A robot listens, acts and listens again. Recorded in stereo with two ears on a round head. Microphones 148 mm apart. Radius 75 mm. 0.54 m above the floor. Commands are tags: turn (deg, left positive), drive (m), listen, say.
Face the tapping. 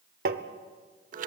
<turn deg="-60"/>
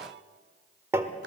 <turn deg="-15"/>
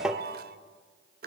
<say>Found it: tapping, straight ahead.</say>